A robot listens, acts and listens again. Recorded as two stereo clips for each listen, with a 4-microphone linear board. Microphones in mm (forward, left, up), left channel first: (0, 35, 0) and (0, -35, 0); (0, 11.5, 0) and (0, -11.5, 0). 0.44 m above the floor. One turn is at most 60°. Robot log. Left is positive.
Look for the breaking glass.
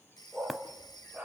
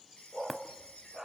cmd yaw -30
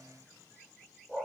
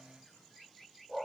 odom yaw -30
cmd idle
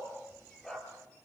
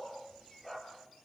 end: I heard breaking glass, but can't make it out now. It was about 25° left or 145° right.